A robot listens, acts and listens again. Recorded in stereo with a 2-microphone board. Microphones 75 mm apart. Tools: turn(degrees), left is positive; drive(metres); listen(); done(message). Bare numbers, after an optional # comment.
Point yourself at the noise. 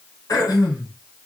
# The throat clearing: about 50° left or 130° left.
turn(50)
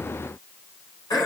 # So it is at 75° left.
turn(75)
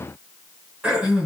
# The throat clearing is now 15° right.
turn(-15)
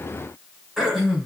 done("Found it: throat clearing, straight ahead, 2 to 4 m away.")